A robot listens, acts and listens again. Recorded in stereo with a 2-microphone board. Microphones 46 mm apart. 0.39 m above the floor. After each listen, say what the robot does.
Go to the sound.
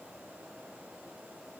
Keep listening.
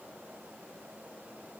Keep listening.
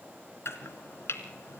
Turn 65° left.
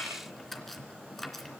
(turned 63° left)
Drive 1.0 m forward.
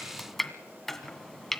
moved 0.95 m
Turn 10° left.
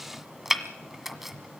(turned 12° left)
Drive 1.0 m forward.
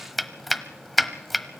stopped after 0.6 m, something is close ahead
I am next to the chopping.